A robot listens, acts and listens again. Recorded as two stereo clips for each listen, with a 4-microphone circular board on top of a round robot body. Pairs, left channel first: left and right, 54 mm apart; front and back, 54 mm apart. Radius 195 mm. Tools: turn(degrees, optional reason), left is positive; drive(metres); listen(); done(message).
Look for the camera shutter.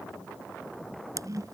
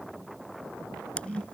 turn(degrees=-70, reason="The camera shutter: 70° right.")
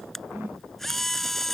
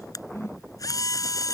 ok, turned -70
done("Facing the camera shutter.")